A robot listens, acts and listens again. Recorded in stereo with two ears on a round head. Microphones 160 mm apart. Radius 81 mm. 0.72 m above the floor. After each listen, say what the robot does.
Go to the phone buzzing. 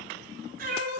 Keep listening.
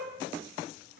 Keep listening.
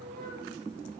I can't make out a phone buzzing, only a cat meowing.